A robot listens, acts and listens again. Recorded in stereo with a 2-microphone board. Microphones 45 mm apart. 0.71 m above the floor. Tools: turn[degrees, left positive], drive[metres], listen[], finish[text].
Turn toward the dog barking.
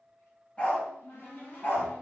Thought: The dog barking: about 45° left or 135° left.
Action: turn[45]
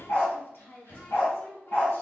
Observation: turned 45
Thought: So it is at 45° left.
Action: turn[45]
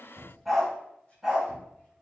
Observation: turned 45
Thought: The dog barking is now 10° right.
Action: turn[-10]
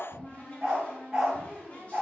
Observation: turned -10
Thought: The dog barking is now 20° right.
Action: turn[-20]
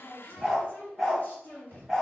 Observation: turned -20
Action: finish[Facing the dog barking.]